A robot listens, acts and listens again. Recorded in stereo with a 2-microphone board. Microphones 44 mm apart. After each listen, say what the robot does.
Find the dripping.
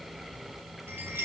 Keep listening.
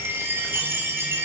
Keep listening.
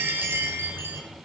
I can't make out dripping, only a chime.